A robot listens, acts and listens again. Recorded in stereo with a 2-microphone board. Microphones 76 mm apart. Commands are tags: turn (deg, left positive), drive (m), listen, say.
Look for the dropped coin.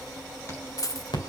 <turn deg="50"/>
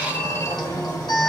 <listen/>
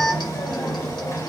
<say>I heard a dropped coin, but can't make it out now. It was about straight ahead or 80° left.</say>